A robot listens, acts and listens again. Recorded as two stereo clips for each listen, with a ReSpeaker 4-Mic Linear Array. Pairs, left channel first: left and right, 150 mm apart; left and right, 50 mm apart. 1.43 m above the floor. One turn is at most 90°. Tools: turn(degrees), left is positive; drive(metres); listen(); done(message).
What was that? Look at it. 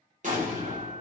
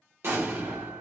turn(degrees=-55)
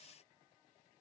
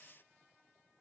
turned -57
listen()
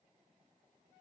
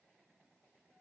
done("I heard an explosion, but can't make it out now. It was about straight ahead or 65° right.")